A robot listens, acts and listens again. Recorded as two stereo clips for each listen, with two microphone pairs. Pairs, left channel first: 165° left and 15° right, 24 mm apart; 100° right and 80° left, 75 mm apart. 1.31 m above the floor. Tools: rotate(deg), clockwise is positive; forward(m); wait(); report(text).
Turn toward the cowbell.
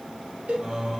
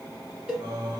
report("Facing the cowbell.")